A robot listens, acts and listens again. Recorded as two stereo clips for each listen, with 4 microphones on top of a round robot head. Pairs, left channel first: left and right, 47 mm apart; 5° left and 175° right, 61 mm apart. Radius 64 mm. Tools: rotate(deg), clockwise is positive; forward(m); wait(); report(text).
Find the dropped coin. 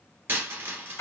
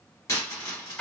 rotate(45)
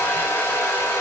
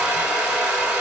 report("Facing where the dropped coin came from. I can't hear it now.")